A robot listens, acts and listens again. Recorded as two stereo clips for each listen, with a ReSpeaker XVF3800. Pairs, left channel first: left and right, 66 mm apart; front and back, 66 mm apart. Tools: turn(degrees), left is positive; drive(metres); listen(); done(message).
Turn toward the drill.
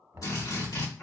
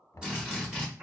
turn(degrees=105)
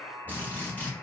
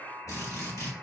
turn(degrees=30)
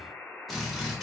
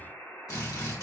done("Found it: a drill, straight ahead, 1 to 2 m away.")